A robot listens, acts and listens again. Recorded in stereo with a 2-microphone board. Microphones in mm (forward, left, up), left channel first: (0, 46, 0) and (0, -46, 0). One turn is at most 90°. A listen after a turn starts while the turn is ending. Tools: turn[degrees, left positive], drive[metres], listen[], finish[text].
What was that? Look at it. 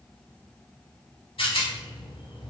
Thought: The rattle: about 75° left or 105° left.
Action: turn[75]
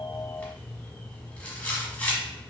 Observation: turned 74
Thought: So it is at 15° left.
Action: turn[15]
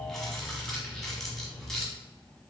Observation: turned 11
Action: finish[Facing the rattle.]